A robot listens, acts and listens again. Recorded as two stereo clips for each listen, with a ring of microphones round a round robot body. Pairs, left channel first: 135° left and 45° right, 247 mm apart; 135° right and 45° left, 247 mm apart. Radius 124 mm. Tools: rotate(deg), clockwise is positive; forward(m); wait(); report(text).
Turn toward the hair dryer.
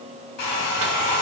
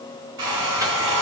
rotate(-85)
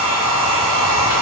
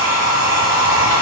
rotate(10)
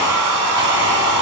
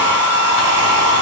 report("Facing the hair dryer.")